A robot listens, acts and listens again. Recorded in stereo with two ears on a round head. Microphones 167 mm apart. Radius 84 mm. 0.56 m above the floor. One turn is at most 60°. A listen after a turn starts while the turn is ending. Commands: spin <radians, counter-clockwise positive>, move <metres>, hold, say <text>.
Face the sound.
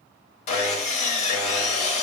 spin 0.61
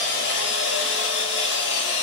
spin 1.05
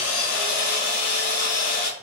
spin 1.05
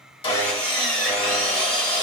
say Facing the sawing, 1 to 2 m away.